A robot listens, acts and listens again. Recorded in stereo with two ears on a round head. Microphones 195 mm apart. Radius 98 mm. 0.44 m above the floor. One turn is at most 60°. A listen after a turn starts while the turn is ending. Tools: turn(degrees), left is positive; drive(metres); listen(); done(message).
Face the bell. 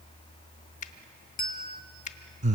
turn(degrees=40)
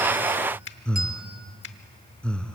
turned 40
listen()
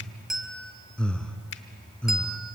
done("Found it: a bell, straight ahead, 1 to 2 m away.")